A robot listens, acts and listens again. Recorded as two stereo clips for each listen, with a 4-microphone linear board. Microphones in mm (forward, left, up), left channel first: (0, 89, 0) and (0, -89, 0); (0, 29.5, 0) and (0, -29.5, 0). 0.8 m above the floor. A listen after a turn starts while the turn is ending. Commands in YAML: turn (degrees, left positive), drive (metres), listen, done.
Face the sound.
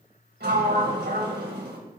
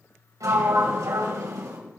turn: -90
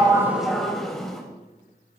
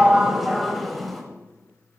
done: "Found it: a sliding door, straight ahead, 2 to 4 m away."